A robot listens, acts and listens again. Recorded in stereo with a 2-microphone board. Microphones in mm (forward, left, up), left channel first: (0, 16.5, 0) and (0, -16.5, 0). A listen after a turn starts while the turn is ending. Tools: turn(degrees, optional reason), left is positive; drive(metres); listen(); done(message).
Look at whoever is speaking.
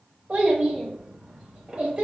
turn(degrees=-40, reason="The child speaking: about 40° right or 140° right.")
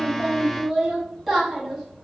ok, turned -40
turn(degrees=-10, reason="So it is at 10° right.")
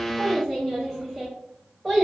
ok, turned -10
done("Found it: a child speaking, straight ahead, 1 to 2 m away.")